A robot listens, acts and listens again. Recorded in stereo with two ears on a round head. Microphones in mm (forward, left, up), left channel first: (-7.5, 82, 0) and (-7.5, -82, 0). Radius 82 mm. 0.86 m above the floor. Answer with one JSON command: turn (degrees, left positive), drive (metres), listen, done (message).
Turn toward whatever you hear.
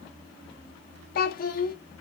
{"turn": 50}
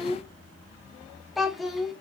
{"done": "Found it: a child speaking, straight ahead."}